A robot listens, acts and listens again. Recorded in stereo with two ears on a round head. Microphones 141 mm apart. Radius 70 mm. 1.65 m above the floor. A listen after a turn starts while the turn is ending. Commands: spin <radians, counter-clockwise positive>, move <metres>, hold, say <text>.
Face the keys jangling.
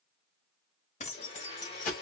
spin 0.87
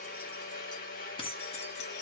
spin 0.61
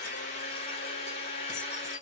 hold
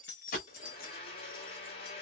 spin 1.05
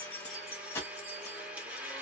spin 0.26
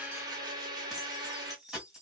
say Facing the keys jangling, 1 to 2 m away.